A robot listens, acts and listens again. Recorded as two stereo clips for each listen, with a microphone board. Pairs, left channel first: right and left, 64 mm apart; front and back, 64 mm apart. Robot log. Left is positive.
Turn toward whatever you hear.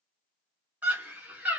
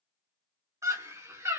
note: The scream: 150° left.
cmd yaw +150
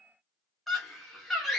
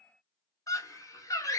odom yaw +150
end: Facing the scream, 1 to 2 m away.